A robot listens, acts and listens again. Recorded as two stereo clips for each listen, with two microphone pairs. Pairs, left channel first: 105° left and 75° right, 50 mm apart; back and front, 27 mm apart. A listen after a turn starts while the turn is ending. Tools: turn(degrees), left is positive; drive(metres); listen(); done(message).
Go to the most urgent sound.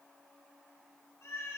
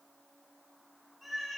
listen()
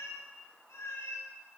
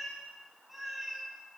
listen()
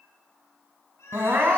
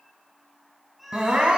turn(degrees=-45)
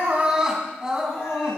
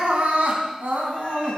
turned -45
drive(metres=1.0)
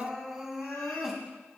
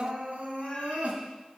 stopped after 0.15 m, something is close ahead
done("Blocked. The crying is further on, straight ahead.")